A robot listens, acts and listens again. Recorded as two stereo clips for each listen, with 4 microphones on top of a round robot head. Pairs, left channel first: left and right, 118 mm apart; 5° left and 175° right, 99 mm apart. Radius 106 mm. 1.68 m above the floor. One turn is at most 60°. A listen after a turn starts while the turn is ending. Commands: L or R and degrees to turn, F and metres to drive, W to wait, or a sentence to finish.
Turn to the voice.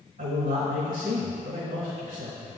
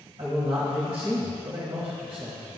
R60
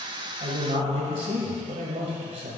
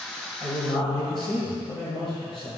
R50
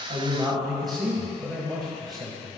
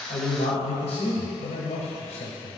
Facing the man speaking, 1 to 2 m away.